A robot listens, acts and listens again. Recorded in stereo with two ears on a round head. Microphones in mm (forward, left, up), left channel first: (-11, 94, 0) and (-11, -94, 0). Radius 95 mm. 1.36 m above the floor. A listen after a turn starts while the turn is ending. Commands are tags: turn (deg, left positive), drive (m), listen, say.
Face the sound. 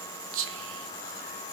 <turn deg="-70"/>
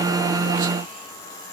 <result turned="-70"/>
<listen/>
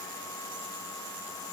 <listen/>
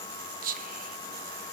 <turn deg="-40"/>
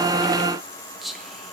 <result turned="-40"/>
<say>Found it: whispering, straight ahead.</say>